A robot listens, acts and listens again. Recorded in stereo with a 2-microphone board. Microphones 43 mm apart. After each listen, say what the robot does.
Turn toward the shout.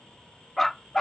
Keep listening.
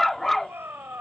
Turn 70° right.
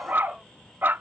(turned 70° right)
Keep listening.
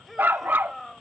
Found it: a shout, straight ahead.